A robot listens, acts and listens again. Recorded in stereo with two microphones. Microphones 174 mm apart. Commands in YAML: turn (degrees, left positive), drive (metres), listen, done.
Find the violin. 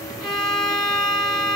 turn: 30
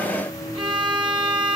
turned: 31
turn: -25
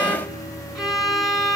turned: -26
done: "Facing the violin, 1 to 2 m away."